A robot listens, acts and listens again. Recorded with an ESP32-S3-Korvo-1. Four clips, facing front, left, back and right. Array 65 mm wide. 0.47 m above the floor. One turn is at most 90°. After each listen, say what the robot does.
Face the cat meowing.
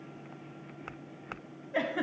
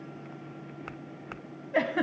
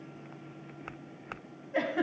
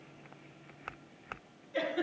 Keep listening.
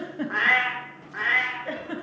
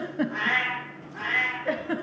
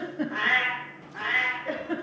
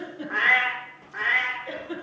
Turn 35° right.
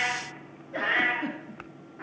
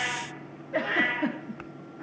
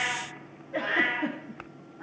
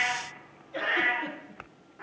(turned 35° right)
Turn 10° right.
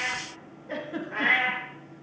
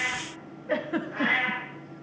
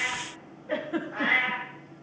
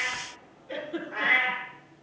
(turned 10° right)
Facing the cat meowing.